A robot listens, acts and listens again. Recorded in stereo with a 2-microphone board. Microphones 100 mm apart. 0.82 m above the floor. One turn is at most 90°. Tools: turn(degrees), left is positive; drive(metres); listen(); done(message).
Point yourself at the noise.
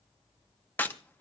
turn(degrees=20)
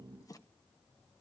listen()
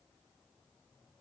done("I heard a crack, but can't make it out now. It was about straight ahead or 140° left.")